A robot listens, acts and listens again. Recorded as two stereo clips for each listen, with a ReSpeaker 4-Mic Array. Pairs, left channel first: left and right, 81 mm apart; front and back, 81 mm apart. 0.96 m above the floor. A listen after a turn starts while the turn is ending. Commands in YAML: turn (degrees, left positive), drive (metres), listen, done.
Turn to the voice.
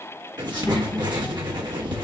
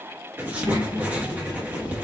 turn: 145
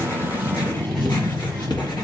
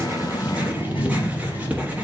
turn: 10
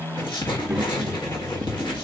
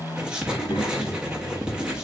done: "Facing the child speaking, 2 to 4 m away."